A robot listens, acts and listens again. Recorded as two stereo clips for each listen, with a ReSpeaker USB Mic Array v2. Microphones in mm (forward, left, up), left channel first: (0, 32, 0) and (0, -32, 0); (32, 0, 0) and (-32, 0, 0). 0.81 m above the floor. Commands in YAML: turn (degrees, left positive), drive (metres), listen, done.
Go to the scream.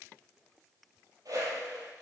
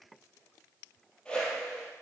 listen: true
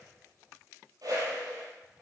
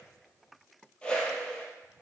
listen: true
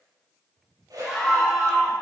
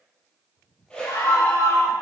drive: 1.0
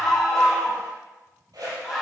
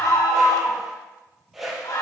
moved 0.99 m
turn: -10
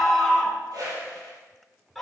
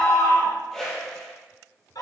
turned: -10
drive: 1.0
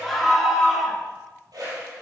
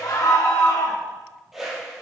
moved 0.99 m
drive: 1.0
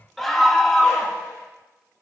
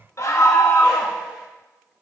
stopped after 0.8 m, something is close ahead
done: "I am next to the scream."